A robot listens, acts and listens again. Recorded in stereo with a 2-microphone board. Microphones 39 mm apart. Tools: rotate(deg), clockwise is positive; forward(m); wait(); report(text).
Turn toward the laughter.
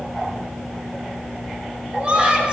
rotate(30)
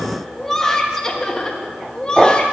rotate(-15)
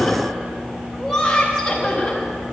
rotate(-10)
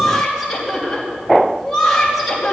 report("Found it: laughter, straight ahead, 2 to 4 m away.")